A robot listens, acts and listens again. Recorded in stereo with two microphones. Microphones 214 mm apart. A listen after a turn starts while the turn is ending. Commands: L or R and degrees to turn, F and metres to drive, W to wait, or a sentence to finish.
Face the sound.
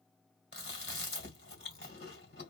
L50
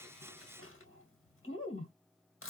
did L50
L75
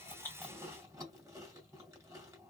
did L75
R15
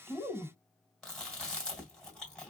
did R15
Facing the chewing.